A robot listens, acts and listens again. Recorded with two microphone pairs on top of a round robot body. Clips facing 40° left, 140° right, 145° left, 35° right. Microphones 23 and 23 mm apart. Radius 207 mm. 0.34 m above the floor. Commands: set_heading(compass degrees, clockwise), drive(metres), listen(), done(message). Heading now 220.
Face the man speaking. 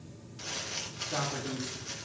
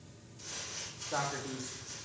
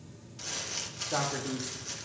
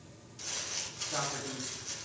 set_heading(35)
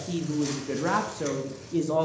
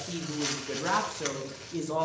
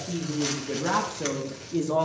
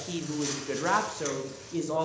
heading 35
set_heading(290)
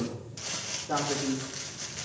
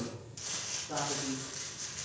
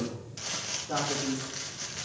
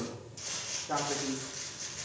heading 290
set_heading(270)
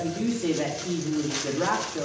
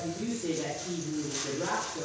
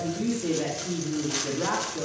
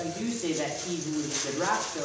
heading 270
done("Facing the man speaking, 1 to 2 m away.")